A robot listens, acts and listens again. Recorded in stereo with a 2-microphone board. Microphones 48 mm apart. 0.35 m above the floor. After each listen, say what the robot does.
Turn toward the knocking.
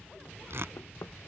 Turn 90° left.
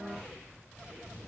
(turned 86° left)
Keep listening.
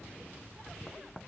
Facing the knocking.